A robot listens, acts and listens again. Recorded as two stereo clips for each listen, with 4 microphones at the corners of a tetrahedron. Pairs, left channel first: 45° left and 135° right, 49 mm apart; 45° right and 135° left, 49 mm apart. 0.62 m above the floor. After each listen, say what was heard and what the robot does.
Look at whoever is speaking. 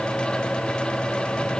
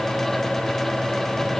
Keep listening.
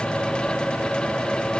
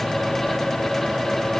Keep listening.
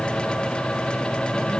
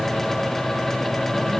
I can't make out anyone speaking.